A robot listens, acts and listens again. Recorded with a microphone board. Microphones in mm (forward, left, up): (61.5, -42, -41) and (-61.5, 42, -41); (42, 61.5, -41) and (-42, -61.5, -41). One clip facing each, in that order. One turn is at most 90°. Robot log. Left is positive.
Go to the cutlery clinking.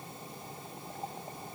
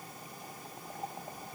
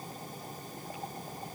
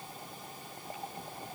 cmd idle
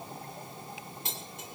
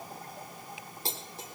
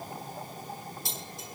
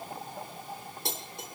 note: The cutlery clinking: 160° right.
cmd yaw -90
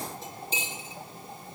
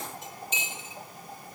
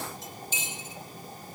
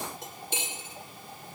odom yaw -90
note: The cutlery clinking is now 90° right.
cmd yaw -90
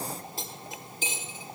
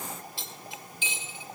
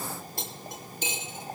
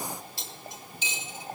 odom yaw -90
note: The cutlery clinking is now 15° left.
cmd yaw +15
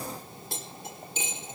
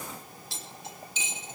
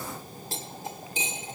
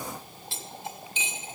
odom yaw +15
cmd fwd 1.0
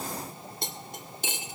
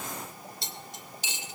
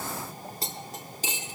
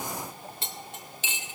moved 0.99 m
cmd fwd 1.0
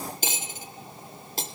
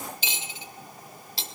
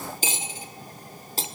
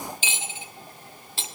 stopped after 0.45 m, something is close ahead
end: I am next to the cutlery clinking.